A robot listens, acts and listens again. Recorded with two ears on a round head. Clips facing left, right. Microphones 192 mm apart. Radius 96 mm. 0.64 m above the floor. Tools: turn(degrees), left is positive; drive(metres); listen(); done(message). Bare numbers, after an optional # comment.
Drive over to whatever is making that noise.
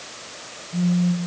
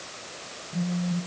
turn(30)
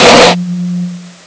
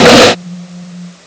# So it is at 20° right.
turn(-20)
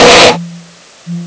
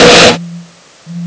drive(1.0)
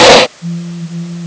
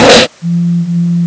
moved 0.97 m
# The phone buzzing is now 10° right.
turn(-10)
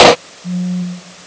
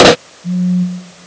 drive(1.0)
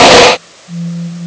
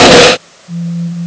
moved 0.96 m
drive(1.0)
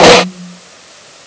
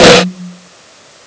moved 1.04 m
# The phone buzzing is now 10° right.
turn(-10)
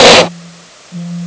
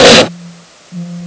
drive(1.0)
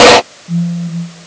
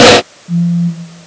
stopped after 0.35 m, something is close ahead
done("Arrived at the phone buzzing, straight ahead.")